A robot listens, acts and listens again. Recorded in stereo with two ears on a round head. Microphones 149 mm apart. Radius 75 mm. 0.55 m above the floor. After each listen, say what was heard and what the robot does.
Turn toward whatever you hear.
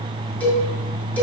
Turn 30° left.
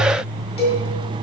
So it is at 140° left. Turn 140° left.
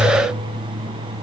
Keep listening.
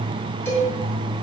The cowbell is now 15° left. Turn 15° left.
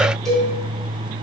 Facing the cowbell, 2 to 4 m away.